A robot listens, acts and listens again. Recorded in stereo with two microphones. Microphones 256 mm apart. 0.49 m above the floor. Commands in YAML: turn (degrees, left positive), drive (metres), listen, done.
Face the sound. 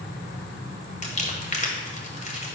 turn: 30
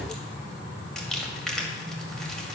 done: "Facing the crumpling."